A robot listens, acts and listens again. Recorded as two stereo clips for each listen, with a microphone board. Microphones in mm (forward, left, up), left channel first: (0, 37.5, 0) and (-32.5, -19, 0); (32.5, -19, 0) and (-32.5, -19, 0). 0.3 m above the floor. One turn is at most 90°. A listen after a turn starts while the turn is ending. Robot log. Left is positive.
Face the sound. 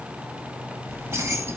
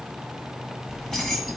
note: The keys jangling: 85° right.
cmd yaw -85
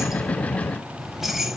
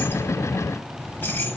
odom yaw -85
note: The keys jangling is now 45° right.
cmd yaw -45
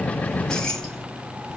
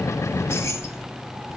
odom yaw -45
note: The keys jangling is now 30° right.
cmd yaw -30
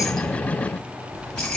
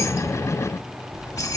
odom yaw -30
note: The keys jangling is now 15° right.
cmd yaw -15
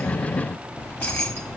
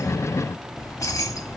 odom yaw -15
end: Facing the keys jangling.